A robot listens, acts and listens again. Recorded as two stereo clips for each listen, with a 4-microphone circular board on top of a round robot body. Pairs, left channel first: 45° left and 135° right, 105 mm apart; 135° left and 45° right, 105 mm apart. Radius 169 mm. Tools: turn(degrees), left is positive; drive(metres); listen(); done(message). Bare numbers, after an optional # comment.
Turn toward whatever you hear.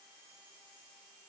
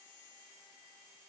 listen()
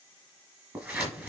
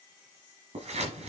# The scissors: 65° right.
turn(-65)
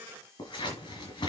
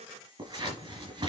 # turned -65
done("Found it: scissors, straight ahead.")